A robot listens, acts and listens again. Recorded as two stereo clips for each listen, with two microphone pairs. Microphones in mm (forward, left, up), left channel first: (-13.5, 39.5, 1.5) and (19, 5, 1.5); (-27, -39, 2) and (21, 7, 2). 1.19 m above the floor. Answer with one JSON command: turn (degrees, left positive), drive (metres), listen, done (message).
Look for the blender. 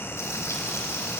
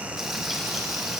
{"listen": true}
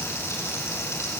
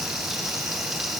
{"listen": true}
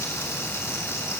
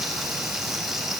{"done": "I can't make out a blender."}